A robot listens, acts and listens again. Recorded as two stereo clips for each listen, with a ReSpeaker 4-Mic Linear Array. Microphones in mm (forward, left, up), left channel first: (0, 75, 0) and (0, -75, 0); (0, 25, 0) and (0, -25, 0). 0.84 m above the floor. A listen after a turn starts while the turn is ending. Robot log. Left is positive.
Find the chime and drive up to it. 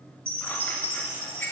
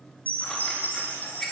note: The chime: about 40° right or 140° right.
cmd yaw -40
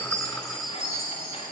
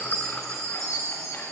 note: So it is at 95° right.
cmd yaw -95
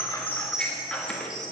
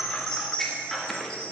note: The chime is now 25° left.
cmd yaw +25
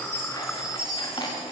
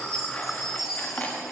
cmd fwd 1.0
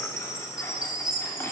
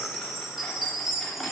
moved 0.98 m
cmd fwd 1.0
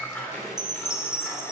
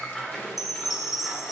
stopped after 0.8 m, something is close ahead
end: Arrived at the chime, straight ahead.